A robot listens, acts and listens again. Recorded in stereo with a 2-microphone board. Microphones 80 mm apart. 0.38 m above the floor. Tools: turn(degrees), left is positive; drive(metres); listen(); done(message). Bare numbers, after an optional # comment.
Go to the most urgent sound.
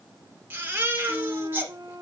# The baby crying: about 25° right or 155° right.
turn(-25)
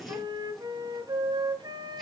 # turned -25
listen()
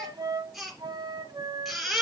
drive(1.0)
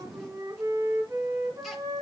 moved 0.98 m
listen()
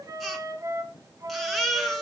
drive(1.0)
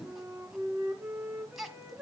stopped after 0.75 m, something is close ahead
done("Arrived at the baby crying, straight ahead.")